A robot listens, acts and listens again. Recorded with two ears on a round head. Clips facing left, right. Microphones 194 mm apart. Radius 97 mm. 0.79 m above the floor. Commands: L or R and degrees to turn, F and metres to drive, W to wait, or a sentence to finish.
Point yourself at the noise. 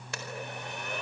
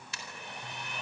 L45
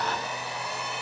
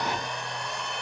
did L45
Found it: a blender, straight ahead.